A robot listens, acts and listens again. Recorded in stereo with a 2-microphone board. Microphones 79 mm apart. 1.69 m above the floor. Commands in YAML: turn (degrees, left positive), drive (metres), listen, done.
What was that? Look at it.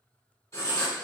turn: 50
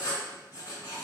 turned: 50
turn: 75
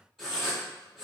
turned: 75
done: "Found it: writing, straight ahead."